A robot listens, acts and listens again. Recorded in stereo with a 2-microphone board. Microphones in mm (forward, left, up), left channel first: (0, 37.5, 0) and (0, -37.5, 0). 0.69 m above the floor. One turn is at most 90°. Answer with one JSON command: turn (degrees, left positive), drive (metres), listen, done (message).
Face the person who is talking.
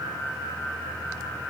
{"listen": true}
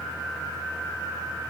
{"listen": true}
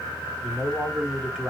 {"turn": -30}
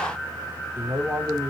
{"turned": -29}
{"turn": -90}
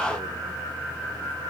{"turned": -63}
{"turn": -80}
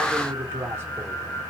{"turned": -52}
{"turn": -30}
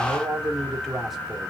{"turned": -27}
{"done": "Facing the man speaking, 1 to 2 m away."}